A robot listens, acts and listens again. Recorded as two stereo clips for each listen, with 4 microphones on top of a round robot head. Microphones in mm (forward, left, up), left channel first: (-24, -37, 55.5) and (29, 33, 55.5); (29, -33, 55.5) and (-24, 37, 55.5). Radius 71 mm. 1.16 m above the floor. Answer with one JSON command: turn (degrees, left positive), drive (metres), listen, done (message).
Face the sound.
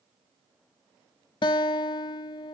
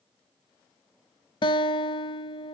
{"turn": -90}
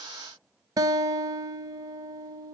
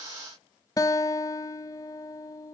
{"done": "Found it: a guitar, straight ahead, under 1 m away."}